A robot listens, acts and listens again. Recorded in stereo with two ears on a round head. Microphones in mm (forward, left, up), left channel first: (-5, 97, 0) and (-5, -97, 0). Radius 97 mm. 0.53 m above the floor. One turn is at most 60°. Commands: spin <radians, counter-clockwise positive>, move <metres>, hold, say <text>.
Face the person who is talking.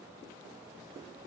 hold
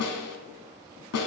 hold
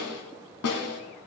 say I can't make out anyone speaking to turn to.